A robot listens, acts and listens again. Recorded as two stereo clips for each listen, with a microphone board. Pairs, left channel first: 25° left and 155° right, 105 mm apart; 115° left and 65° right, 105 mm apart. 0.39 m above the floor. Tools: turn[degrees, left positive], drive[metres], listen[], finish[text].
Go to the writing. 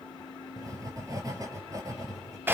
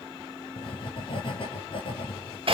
Thought: The writing: 145° left.
Action: turn[145]
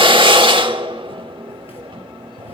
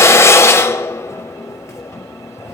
Thought: The writing is now 50° left.
Action: turn[50]
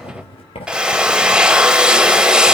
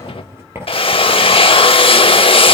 Action: drive[1.0]
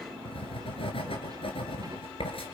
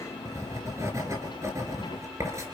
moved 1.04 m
Action: drive[1.0]
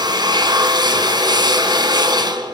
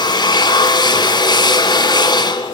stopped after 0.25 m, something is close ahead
Action: listen[]
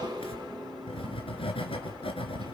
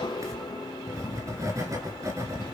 Thought: The writing is now 10° right.
Action: turn[-10]
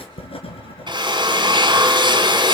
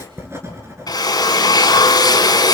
Action: finish[Blocked. The writing is further on, straight ahead.]